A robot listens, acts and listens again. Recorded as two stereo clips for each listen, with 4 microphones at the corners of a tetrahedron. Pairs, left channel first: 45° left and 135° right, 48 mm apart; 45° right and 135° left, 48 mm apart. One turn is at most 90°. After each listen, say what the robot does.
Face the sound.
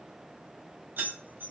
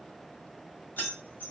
Turn 90° right.
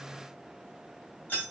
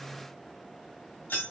Turn 10° right.
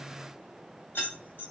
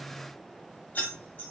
Found it: keys jangling, straight ahead, 1 to 2 m away.